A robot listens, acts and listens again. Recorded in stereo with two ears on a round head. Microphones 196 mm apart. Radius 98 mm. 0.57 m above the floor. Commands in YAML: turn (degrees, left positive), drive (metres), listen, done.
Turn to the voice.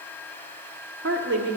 turn: -55
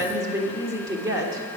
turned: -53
turn: -20
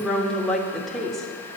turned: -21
done: "Facing the woman speaking."